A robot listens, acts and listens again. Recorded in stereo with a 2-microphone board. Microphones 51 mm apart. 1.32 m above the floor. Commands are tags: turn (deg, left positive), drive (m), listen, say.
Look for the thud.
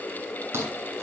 <turn deg="-50"/>
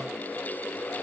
<listen/>
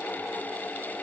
<say>I heard a thud, but can't make it out now. It was about straight ahead or 80° right.</say>